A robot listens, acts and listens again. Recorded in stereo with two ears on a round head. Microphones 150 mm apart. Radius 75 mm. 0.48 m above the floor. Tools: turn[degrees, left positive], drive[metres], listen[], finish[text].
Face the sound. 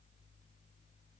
Action: listen[]
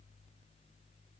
Action: listen[]
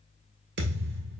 Thought: The thud: about 70° right or 110° right.
Action: turn[-70]
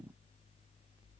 Action: listen[]
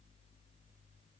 Action: finish[I heard a thud, but can't make it out now. It was about straight ahead or 40° right.]